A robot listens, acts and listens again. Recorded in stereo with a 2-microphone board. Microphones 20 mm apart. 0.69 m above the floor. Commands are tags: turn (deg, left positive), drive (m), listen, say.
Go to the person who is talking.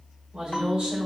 <turn deg="-60"/>
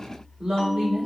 <turn deg="-55"/>
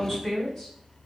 <turn deg="15"/>
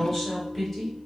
<drive m="1.0"/>
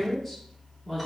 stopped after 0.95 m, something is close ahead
<turn deg="10"/>
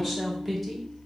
<say>I am next to the woman speaking.</say>